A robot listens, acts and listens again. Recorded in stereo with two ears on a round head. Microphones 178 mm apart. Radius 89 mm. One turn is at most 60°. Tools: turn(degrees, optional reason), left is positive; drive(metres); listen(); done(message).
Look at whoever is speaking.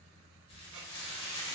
listen()
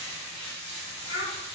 turn(degrees=60)
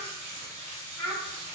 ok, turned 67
turn(degrees=15, reason="So it is at 15° left.")
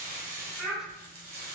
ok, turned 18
done("Found it: a child speaking, straight ahead.")